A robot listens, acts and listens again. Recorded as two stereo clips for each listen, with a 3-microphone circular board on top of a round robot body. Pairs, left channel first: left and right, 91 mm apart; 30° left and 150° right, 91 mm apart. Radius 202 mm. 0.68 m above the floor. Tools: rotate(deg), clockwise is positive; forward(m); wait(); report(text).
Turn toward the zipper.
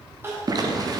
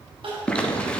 rotate(50)
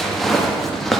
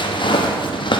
report("Facing the zipper, 1 to 2 m away.")